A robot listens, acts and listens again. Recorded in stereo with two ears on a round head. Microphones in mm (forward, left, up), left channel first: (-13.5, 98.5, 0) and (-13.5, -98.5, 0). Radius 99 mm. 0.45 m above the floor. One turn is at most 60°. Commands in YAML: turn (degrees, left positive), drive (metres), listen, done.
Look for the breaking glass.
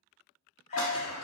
turn: 60
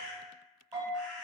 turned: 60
turn: 30
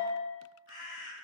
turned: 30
done: "I heard breaking glass from this way, but can't make it out now."